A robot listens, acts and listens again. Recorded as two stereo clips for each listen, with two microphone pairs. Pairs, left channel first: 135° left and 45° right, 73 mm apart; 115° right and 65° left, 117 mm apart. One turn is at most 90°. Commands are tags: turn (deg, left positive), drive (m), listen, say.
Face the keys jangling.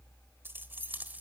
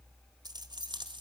<turn deg="20"/>
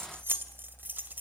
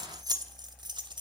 <turn deg="20"/>
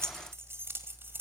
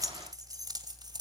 <turn deg="15"/>
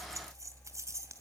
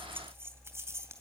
<say>Facing the keys jangling.</say>